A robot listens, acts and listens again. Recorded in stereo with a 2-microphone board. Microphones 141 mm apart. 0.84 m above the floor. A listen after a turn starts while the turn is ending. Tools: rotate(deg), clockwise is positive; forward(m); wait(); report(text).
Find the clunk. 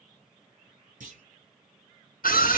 rotate(60)
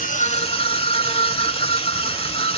wait()
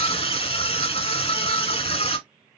report("I heard a clunk, but can't make it out now. It was about straight ahead or 60° right.")